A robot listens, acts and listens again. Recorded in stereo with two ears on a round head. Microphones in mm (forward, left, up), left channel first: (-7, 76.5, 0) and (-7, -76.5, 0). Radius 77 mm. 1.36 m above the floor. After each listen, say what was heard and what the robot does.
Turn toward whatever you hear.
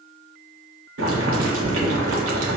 Turn 90° right.
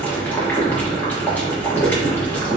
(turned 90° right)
So it is at 10° left. Turn 10° left.
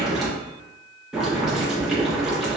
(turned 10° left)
Facing the boiling.